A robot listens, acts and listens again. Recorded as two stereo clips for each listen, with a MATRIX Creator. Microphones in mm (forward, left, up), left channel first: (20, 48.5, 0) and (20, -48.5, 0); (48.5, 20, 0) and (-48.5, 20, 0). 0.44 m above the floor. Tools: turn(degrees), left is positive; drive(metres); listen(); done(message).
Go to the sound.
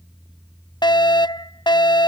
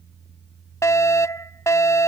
turn(degrees=55)
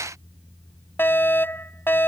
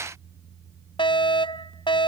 turn(degrees=25)
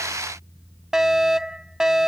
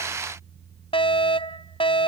drive(metres=1.0)
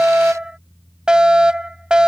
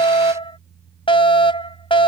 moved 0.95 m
turn(degrees=-10)
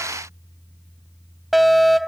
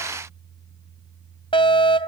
drive(metres=1.0)
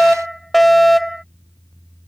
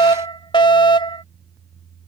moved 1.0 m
drive(metres=1.0)
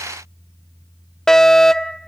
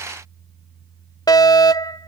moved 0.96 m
turn(degrees=10)
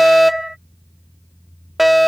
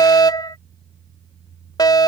drive(metres=1.0)
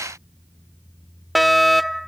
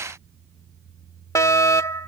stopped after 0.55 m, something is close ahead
done("I am next to the fire alarm.")